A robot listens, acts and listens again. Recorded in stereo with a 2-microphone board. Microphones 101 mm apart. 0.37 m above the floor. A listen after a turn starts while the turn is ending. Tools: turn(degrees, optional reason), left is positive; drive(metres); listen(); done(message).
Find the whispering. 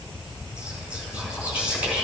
turn(degrees=-30)
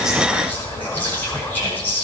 turn(degrees=20, reason="So it is at 20° left.")
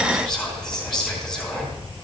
done("Facing the whispering.")